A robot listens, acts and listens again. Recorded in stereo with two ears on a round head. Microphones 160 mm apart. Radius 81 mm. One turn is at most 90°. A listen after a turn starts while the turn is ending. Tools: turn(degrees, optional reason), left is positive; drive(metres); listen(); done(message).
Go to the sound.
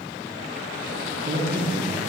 turn(degrees=-60, reason="The man speaking: about 60° right or 120° right.")
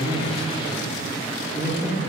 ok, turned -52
turn(degrees=-15, reason="So it is at 15° right.")
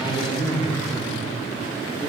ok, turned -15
drive(metres=1.0)
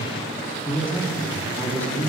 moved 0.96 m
turn(degrees=10, reason="The man speaking is now 10° left.")
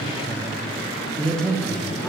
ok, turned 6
drive(metres=1.0)
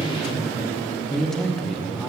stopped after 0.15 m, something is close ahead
done("I am next to the man speaking.")